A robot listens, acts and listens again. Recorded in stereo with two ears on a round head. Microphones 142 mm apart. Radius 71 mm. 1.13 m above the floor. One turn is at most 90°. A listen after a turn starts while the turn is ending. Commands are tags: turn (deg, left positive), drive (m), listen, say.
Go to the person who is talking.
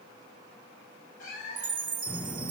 <turn deg="15"/>
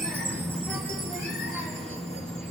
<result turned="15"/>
<drive m="1.0"/>
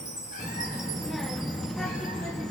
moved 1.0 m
<drive m="1.0"/>
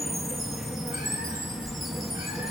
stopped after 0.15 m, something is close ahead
<say>I am next to the child speaking.</say>